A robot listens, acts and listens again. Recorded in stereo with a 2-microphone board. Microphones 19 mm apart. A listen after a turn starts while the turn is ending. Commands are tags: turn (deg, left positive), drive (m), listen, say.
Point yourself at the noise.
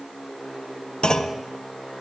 <turn deg="60"/>
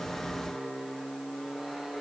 <listen/>
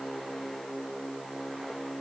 <say>I heard a clunk, but can't make it out now. It was about straight ahead or 60° left.</say>